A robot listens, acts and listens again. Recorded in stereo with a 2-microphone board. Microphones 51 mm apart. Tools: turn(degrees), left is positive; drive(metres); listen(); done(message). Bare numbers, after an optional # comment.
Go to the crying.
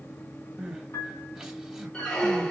turn(-30)
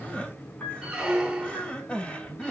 # So it is at 25° left.
turn(25)
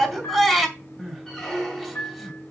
drive(1.0)
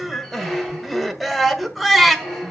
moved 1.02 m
drive(1.0)
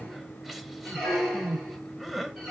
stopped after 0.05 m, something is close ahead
done("Arrived at the crying, straight ahead.")